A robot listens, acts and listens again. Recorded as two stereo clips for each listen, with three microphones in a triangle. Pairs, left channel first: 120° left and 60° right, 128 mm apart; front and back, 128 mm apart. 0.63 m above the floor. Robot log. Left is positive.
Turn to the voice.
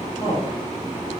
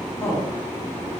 note: The woman speaking: 65° left.
cmd yaw +65
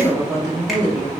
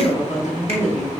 end: Facing the woman speaking.